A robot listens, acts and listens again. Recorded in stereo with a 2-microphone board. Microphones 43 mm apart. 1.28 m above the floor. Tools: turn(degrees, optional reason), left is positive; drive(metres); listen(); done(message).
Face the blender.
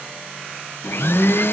turn(degrees=65, reason="The blender: about 65° left or 115° left.")
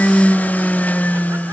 turn(degrees=45, reason="So it is at 45° left.")
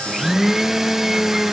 turn(degrees=-10, reason="The blender is now 10° right.")
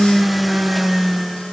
done("Found it: a blender, straight ahead.")